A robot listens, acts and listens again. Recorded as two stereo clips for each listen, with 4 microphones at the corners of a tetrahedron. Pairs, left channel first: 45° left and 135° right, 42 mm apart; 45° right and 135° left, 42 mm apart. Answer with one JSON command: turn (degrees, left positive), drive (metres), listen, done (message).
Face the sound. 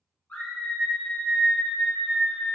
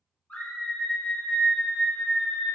{"done": "Facing the scream."}